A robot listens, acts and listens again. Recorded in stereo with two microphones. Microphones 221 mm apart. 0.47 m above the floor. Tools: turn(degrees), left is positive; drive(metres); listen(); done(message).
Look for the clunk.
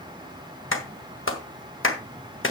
listen()
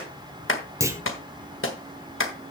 turn(degrees=-30)
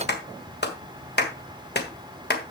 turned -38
listen()
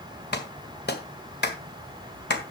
done("I heard a clunk, but can't make it out now. It was about 25° left or 130° right.")